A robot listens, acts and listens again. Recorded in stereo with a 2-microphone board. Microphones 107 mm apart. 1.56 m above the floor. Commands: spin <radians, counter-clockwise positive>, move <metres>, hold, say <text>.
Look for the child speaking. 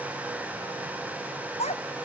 spin 1.57
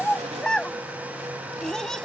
say Found it: a child speaking, straight ahead.